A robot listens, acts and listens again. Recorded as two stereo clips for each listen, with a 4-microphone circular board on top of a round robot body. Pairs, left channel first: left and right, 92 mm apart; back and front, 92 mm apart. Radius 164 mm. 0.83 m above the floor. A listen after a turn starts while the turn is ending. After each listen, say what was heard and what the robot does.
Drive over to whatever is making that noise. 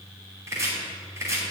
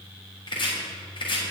The chopping: 150° right. Turn 150° right.
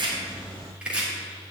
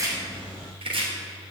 The chopping is now 10° right. Turn 10° right.
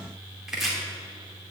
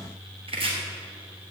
Drive 1.0 m forward.
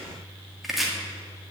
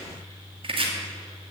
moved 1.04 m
Drive 1.0 m forward.
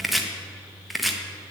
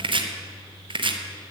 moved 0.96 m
Drive 1.0 m forward.
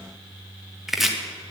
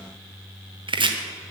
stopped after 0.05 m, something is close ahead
Arrived at the chopping, straight ahead.